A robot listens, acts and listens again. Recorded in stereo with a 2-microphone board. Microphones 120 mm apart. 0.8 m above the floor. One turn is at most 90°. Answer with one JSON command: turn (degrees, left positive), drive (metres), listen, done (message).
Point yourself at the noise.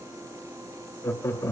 {"turn": 25}
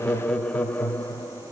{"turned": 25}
{"turn": 20}
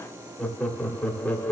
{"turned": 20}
{"turn": 15}
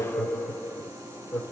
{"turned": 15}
{"turn": 30}
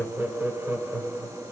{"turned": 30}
{"turn": -15}
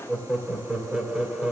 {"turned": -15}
{"done": "Facing the laughter, 2 to 4 m away."}